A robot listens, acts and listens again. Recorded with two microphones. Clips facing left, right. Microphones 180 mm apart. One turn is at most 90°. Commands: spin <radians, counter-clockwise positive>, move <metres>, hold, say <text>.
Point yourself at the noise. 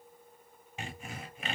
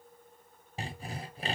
spin -0.61
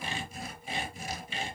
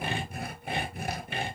spin -1.57
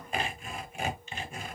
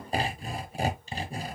spin -0.70
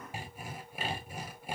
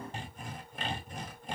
spin 0.17
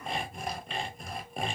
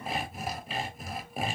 say Found it: sawing, straight ahead.